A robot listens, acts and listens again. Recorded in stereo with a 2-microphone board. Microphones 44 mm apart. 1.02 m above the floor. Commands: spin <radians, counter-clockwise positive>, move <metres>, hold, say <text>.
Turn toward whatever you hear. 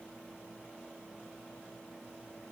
hold
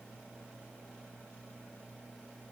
hold
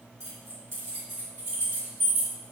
spin -1.22
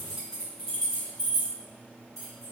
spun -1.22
say Facing the keys jangling, over 4 m away.